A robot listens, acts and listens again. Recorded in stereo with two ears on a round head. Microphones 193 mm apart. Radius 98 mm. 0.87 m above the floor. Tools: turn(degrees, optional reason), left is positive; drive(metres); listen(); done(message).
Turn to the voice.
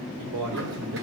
turn(degrees=-90)
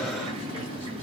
listen()
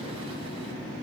listen()
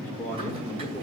turn(degrees=10, reason="The man speaking is now 10° left.")
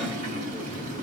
listen()
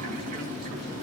listen()
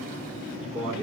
done("Facing the man speaking, 2 to 4 m away.")